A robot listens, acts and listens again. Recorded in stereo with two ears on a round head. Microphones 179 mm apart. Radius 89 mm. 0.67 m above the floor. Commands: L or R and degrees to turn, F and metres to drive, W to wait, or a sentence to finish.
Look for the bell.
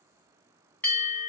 L30
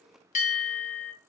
L140
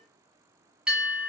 Facing the bell.